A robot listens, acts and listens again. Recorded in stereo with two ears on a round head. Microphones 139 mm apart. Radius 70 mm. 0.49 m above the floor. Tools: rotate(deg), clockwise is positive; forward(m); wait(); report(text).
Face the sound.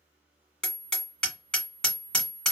rotate(-30)
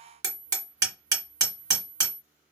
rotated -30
rotate(25)
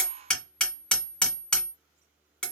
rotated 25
report("Facing the hammering.")